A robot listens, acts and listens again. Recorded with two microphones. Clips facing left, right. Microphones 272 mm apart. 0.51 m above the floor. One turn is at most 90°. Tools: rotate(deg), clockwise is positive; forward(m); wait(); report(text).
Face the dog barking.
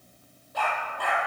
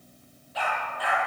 rotate(-50)
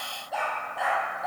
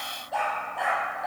report("Found it: a dog barking, straight ahead, over 4 m away.")